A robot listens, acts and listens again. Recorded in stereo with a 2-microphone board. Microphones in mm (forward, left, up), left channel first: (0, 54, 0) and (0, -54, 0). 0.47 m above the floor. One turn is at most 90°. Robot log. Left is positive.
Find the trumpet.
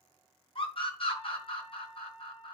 cmd yaw +90
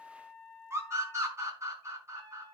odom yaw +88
note: So it is at 10° left.
cmd yaw +10
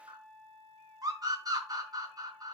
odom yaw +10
end: Found it: a trumpet, straight ahead, over 4 m away.